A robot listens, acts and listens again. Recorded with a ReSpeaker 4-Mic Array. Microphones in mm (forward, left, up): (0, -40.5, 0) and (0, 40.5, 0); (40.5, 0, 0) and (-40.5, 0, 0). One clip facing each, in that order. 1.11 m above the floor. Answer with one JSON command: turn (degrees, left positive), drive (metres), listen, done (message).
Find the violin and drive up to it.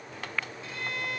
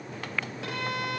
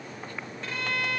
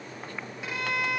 {"turn": 100}
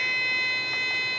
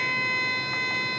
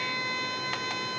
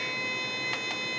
{"turn": 20}
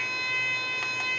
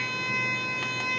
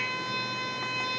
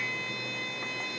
{"drive": 1.0}
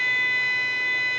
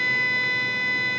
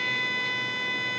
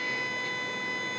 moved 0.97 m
{"turn": 10}
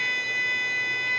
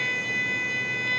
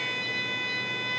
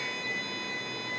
{"drive": 1.0}
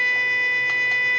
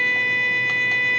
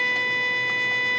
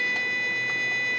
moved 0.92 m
{"turn": -10}
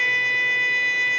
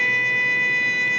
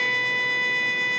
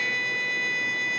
{"drive": 1.0}
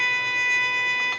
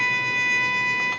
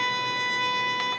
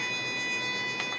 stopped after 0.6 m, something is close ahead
{"done": "Arrived at the violin, straight ahead."}